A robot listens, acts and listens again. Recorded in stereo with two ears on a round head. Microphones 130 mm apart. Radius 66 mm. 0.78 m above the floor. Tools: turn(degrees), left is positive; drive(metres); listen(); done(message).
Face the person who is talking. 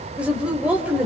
turn(degrees=-30)
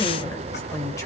turn(degrees=20)
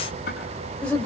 turn(degrees=10)
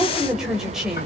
done("Facing the woman speaking, over 4 m away.")